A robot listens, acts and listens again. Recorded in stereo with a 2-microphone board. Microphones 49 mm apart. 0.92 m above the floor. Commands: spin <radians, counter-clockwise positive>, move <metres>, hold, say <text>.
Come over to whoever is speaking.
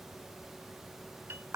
hold
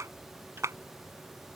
hold
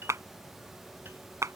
say I can't make out anyone speaking to turn to.